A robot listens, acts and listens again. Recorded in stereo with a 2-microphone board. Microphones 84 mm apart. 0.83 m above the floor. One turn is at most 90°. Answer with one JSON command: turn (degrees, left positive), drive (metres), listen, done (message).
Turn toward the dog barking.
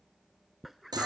{"turn": 30}
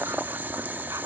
{"listen": true}
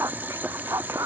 {"turn": -40}
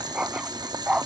{"turn": -15}
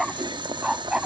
{"turn": -10}
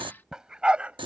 {"turn": -15}
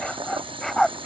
{"done": "Found it: a dog barking, straight ahead."}